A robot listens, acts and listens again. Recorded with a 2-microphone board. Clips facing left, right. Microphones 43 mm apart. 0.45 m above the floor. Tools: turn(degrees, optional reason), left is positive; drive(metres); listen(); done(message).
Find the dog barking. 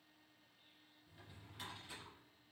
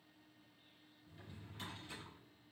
listen()
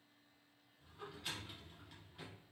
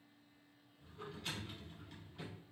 listen()
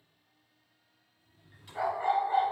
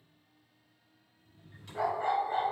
turn(degrees=30)
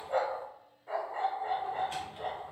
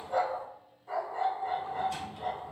turn(degrees=140, reason="So it is at 140° left.")
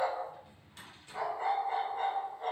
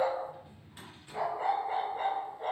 turn(degrees=-25, reason="The dog barking is now 25° right.")
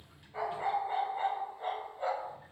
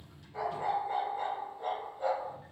turn(degrees=15, reason="The dog barking is now 15° left.")
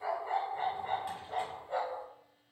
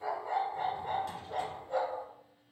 done("Found it: a dog barking, straight ahead.")